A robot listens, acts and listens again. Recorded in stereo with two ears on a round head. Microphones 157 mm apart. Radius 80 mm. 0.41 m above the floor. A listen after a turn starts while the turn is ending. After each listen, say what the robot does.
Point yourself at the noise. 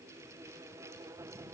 Keep listening.
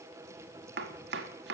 Turn 70° right.
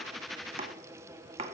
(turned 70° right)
Turn 35° right.
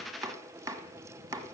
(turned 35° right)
Turn 20° right.
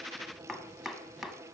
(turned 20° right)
Facing the chopping, 1 to 2 m away.